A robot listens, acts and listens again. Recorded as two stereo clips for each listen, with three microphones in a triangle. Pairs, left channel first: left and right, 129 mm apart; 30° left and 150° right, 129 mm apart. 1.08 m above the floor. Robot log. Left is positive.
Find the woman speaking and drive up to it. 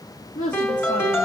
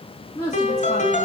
note: The woman speaking: 90° left.
cmd yaw +90
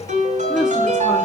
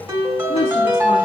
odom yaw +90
cmd fwd 1.0
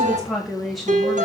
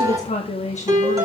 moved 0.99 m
cmd fwd 1.0
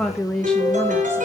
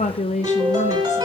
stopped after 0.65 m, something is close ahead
end: Arrived at the woman speaking, straight ahead.